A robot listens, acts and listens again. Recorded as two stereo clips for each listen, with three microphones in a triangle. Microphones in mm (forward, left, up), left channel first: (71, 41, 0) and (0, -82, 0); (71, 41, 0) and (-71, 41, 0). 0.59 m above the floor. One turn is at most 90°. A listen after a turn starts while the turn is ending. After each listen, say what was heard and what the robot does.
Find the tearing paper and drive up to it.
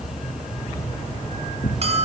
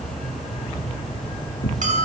The tearing paper: 15° left. Turn 15° left.
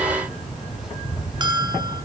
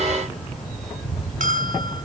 Keep listening.
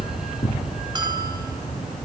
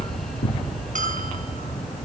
Drive 1.0 m forward.
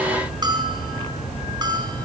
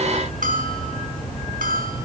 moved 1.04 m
Keep listening.
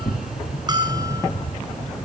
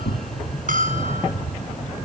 Drive 1.0 m forward.
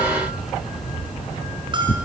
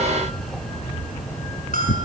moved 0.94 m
Drive 1.0 m forward.
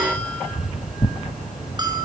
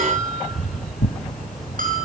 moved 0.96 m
The tearing paper is now 10° right. Turn 10° right.
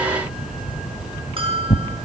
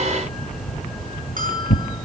Drive 1.0 m forward.
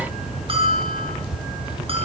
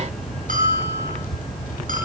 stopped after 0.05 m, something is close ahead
Keep listening.
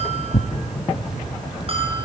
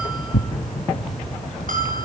I am next to the tearing paper.